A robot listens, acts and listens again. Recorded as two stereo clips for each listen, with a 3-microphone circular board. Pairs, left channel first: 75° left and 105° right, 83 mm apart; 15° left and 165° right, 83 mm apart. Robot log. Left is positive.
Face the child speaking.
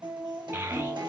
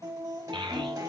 note: The child speaking: 160° right.
cmd yaw -160
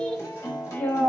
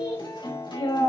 note: The child speaking is now 10° left.
cmd yaw +10
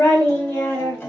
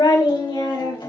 end: Found it: a child speaking, straight ahead, 2 to 4 m away.